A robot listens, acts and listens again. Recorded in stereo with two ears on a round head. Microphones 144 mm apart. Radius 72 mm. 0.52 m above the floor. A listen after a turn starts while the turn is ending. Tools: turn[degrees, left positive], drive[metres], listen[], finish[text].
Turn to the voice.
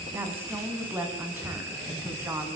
Action: turn[-30]
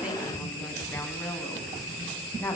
Thought: So it is at 15° left.
Action: turn[15]
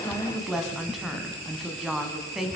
Action: finish[Found it: a woman speaking, straight ahead.]